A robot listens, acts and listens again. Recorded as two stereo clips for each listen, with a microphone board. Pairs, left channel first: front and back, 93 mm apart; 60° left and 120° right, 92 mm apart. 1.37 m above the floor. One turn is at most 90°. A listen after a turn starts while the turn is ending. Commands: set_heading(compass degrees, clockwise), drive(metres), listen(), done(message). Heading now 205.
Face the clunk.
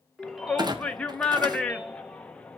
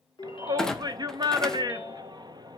set_heading(115)
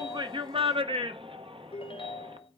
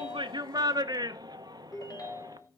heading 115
set_heading(60)
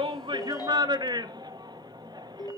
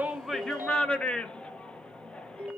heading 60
done("Facing where the clunk came from. I can't hear it now.")